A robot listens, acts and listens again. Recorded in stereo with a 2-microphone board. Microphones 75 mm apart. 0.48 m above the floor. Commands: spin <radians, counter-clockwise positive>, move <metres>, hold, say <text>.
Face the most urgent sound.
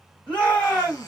spin 0.26
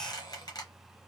hold
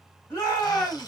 spin 2.62
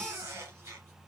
hold
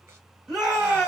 say Found it: a shout, straight ahead.